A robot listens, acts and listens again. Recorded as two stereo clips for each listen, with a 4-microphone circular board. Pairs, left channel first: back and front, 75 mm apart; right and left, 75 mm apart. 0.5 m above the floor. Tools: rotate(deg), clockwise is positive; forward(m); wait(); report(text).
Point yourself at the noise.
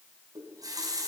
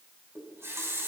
rotate(-35)
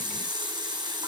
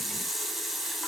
report("Found it: a running tap, straight ahead.")